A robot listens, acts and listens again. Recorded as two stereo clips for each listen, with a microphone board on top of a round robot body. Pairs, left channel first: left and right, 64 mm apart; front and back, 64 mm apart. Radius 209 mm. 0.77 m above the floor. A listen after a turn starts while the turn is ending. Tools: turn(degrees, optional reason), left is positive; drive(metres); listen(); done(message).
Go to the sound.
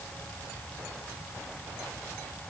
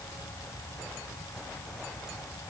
listen()
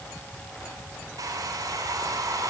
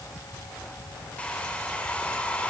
turn(degrees=-70, reason="The hair dryer: 70° right.")
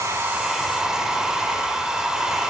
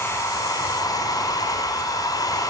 turn(degrees=-10, reason="The hair dryer is now 10° right.")
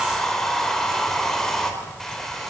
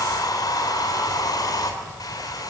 drive(metres=1.0)
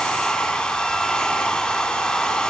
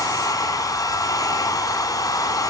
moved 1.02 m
turn(degrees=15, reason="The hair dryer is now 15° left.")
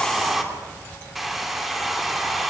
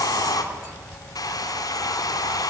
drive(metres=1.0)
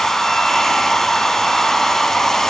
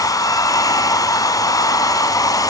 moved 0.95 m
drive(metres=1.0)
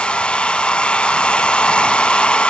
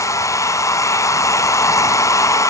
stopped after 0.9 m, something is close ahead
turn(degrees=20, reason="The hair dryer is now 20° left.")
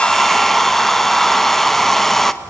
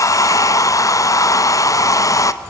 done("I am next to the hair dryer.")